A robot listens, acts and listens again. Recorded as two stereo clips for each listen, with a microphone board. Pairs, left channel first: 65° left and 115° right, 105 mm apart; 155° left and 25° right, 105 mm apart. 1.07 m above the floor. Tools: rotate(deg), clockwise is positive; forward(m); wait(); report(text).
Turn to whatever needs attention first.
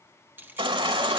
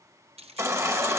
rotate(80)
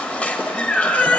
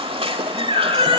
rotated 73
rotate(10)
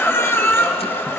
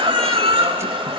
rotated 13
report("Facing the baby crying.")